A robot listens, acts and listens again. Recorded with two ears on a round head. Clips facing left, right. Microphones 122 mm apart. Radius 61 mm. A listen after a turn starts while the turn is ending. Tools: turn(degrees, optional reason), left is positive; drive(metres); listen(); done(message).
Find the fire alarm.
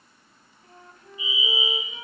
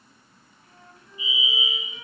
turn(degrees=-30, reason="The fire alarm: about 30° right or 150° right.")
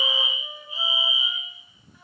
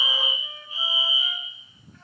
turn(degrees=-125, reason="So it is at 125° right.")
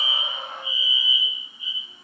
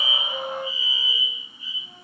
turn(degrees=15, reason="The fire alarm is now 15° left.")
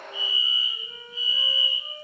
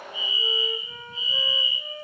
done("Facing the fire alarm.")